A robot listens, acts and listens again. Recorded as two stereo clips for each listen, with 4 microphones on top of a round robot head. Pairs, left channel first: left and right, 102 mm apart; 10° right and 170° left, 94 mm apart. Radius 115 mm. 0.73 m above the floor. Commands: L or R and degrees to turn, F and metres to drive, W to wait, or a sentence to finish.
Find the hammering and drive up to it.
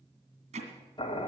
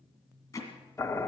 R70
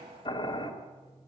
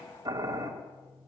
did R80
L10
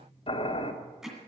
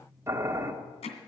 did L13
F1.0
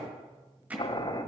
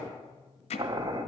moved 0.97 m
R10
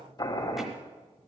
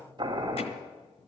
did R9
W
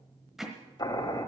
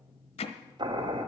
F1.0
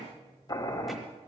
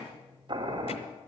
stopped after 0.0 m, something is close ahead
W
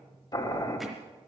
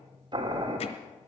W
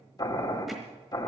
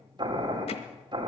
I heard hammering from this way, but can't make it out now. I did not reach it.